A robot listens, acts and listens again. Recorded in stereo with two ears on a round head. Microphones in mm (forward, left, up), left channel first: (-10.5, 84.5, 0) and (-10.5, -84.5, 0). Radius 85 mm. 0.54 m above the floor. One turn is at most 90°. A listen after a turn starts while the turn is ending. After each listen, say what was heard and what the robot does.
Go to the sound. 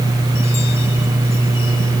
Keep listening.
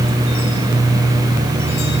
Keep listening.
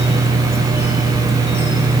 I can't make out anything.